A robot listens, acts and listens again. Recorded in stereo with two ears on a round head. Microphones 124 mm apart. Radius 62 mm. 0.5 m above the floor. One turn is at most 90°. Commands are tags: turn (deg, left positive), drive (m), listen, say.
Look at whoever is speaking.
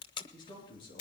<turn deg="35"/>
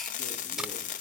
<listen/>
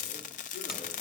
<listen/>
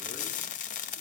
<say>I heard a man speaking, but can't make it out now. It was about straight ahead or 110° left.</say>